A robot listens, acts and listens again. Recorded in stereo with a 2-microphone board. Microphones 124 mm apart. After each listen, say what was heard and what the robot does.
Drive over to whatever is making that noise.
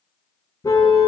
The car horn: about 30° left or 150° left. Turn 30° left.
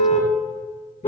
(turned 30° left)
So it is at 120° left. Turn 120° left.
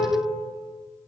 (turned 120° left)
Keep listening.
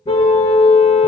The car horn is now 50° left. Turn 50° left.
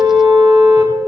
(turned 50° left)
The car horn is now 10° right. Turn 10° right.
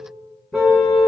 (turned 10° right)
Drive 1.0 m forward.
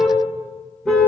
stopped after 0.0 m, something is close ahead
Something is in my way. I am facing the car horn but have not reached it.